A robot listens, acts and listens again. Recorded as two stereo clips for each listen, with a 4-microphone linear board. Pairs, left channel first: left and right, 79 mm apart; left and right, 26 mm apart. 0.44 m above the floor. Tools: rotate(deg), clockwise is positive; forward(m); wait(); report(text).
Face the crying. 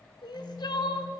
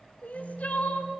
rotate(-70)
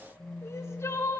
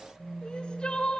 rotate(-35)
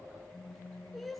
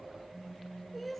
report("Facing the crying, under 1 m away.")